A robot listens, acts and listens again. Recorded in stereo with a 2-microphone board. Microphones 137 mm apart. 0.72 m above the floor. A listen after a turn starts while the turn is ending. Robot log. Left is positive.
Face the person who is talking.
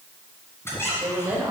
note: The woman speaking: about 20° right or 160° right.
cmd yaw -20
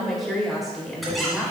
end: Found it: a woman speaking, straight ahead, 2 to 4 m away.